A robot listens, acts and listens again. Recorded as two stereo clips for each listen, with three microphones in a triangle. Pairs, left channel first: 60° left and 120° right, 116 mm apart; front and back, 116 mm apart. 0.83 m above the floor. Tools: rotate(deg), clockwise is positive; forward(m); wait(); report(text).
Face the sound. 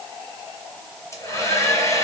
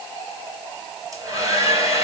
rotate(-120)
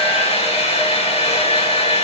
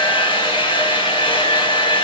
rotate(-40)
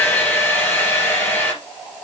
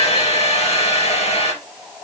rotate(10)
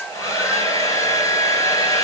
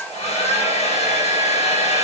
report("Facing the hair dryer.")